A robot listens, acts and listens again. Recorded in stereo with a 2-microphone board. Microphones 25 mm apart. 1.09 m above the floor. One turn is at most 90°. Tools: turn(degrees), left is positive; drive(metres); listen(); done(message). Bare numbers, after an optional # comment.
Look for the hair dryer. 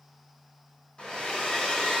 # The hair dryer: about 45° left or 135° left.
turn(45)
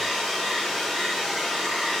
done("Facing the hair dryer.")